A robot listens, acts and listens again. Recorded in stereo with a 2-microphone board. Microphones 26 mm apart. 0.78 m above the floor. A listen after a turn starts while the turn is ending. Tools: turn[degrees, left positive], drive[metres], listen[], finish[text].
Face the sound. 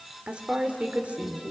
Thought: The woman speaking: about 60° right or 120° right.
Action: turn[-60]
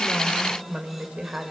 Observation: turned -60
Thought: So it is at 45° right.
Action: turn[-45]
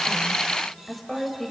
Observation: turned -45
Thought: The woman speaking is now 10° left.
Action: turn[10]
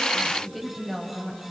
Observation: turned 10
Action: finish[Facing the woman speaking, 2 to 4 m away.]